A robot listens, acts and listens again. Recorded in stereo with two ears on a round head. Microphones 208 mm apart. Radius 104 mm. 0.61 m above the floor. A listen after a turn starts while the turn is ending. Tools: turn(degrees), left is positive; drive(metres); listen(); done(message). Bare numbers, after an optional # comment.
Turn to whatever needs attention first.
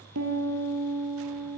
listen()
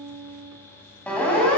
turn(30)
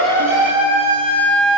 # So it is at 25° right.
turn(-25)
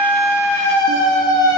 # The siren is now 20° left.
turn(20)
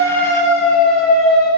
done("Facing the siren, over 4 m away.")